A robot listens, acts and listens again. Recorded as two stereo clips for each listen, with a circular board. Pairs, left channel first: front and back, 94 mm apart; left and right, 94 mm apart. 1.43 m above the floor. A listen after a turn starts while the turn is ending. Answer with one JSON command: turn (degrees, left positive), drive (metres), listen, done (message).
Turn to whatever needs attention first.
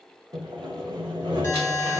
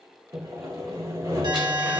{"turn": -65}
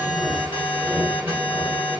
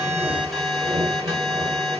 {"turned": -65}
{"done": "Facing the alarm, 1 to 2 m away."}